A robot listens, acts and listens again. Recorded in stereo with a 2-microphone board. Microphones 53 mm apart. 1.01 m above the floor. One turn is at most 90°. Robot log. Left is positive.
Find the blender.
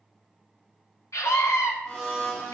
cmd yaw +30
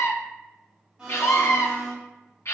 note: So it is at 20° right.
cmd yaw -20
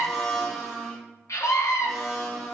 end: Facing the blender.